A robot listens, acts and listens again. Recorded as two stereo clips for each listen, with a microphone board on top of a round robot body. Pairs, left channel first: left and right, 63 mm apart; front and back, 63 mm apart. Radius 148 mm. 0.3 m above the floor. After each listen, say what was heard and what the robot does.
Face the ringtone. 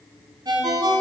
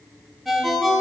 The ringtone: 90° right. Turn 90° right.
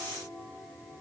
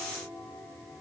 Keep listening.
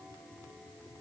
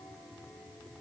Keep listening.
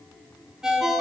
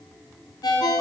The ringtone is now 10° right. Turn 10° right.
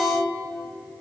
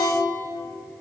Found it: a ringtone, straight ahead.